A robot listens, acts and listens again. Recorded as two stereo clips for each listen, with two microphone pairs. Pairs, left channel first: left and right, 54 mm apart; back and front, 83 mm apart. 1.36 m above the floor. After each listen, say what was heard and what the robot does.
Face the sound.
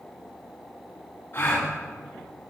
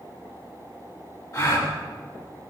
The gasp: 130° left. Turn 130° left.
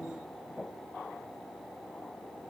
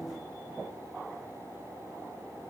I heard a gasp from this way, but can't make it out now.